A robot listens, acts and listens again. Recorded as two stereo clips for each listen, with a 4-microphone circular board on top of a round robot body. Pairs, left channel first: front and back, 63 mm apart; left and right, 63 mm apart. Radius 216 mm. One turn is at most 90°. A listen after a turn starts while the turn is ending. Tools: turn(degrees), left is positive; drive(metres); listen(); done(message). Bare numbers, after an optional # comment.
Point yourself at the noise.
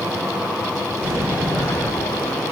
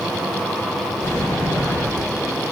# The sliding door: 130° left.
turn(90)
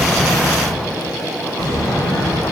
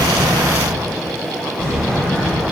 # The sliding door is now 25° left.
turn(25)
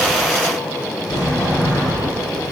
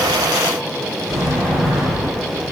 done("Facing the sliding door.")